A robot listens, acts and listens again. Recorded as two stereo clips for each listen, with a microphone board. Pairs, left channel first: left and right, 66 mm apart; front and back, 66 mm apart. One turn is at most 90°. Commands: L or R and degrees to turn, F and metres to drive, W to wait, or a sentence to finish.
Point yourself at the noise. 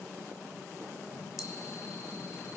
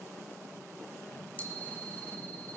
L65
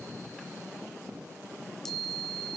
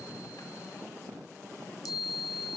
Found it: a chime, straight ahead.